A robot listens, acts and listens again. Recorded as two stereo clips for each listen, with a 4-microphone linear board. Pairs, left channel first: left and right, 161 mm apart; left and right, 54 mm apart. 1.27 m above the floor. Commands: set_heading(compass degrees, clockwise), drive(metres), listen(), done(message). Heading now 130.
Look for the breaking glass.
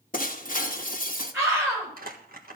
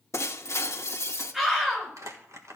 set_heading(70)
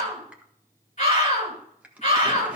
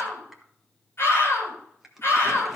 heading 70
listen()
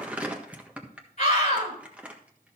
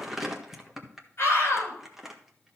done("I heard breaking glass, but can't make it out now. It was about straight ahead or 60° left.")